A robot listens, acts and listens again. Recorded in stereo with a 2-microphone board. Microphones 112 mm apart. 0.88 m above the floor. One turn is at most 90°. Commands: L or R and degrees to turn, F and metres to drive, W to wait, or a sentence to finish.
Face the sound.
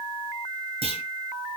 R70
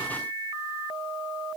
W
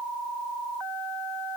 I heard a clunk, but can't make it out now. It was about straight ahead or 40° right.